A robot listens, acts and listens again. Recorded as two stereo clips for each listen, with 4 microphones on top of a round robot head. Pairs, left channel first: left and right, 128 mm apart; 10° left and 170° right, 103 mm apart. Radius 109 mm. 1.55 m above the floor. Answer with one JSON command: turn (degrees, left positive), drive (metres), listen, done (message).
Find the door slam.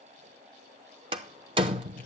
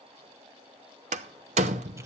{"turn": -150}
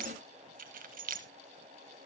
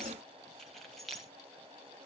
{"done": "I heard a door slam from this way, but can't make it out now."}